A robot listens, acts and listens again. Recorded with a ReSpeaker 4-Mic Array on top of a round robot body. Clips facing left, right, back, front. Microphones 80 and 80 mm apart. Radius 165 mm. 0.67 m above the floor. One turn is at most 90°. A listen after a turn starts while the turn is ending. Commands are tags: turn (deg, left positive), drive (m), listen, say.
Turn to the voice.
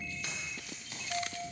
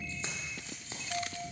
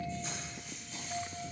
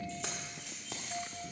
<listen/>
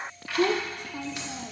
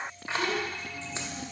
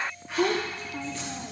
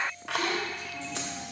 <turn deg="90"/>
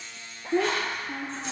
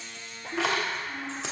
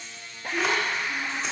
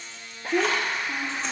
<turn deg="50"/>
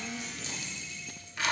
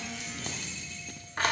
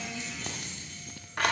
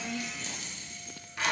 <listen/>
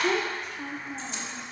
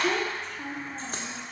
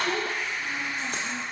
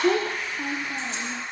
<say>Facing the child speaking.</say>